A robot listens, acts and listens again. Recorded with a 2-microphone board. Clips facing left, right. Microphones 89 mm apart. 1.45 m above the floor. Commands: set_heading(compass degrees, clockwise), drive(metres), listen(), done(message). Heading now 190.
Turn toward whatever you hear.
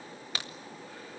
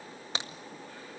set_heading(215)
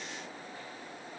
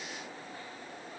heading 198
listen()
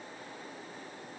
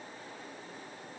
done("I heard a crack, but can't make it out now. It was about 15° right or 150° right.")